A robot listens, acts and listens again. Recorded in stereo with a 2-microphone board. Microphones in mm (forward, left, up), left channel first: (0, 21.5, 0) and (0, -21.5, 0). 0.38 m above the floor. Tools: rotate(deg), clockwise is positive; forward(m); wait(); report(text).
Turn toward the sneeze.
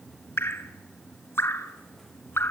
wait()
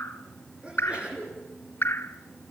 rotate(25)
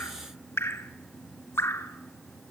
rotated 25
wait()
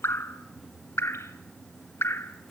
report("I heard a sneeze, but can't make it out now. It was about straight ahead or 130° right.")